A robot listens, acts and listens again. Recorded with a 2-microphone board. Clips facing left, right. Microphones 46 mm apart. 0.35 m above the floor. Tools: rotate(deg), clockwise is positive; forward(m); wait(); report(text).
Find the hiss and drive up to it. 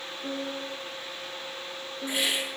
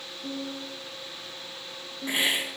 rotate(30)
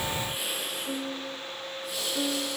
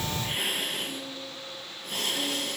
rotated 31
rotate(115)
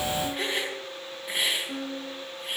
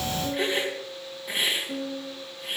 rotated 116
forward(1.0)
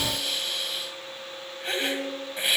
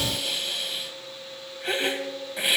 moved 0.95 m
forward(1.0)
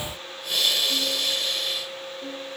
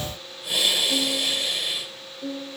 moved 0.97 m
rotate(15)
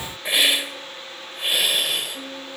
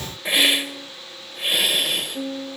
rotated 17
forward(1.0)
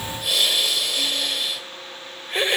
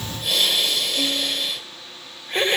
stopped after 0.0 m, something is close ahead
report("I am next to the hiss.")